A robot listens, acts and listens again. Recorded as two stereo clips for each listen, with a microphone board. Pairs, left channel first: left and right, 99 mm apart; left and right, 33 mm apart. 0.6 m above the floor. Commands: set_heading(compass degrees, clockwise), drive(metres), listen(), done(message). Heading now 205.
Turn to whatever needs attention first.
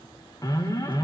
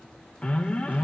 set_heading(165)
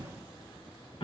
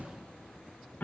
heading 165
set_heading(70)
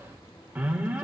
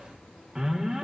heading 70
set_heading(85)
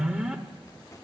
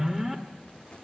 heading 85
set_heading(95)
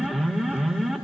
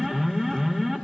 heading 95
done("Found it: an alarm, straight ahead, 1 to 2 m away.")